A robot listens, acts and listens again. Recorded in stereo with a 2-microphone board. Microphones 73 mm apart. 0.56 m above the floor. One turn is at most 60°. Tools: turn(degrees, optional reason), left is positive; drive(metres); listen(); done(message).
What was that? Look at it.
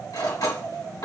turn(degrees=60, reason="The cutlery clinking: about 70° left or 110° left.")
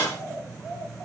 turn(degrees=50, reason="So it is at 50° left.")
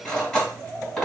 done("Facing the cutlery clinking.")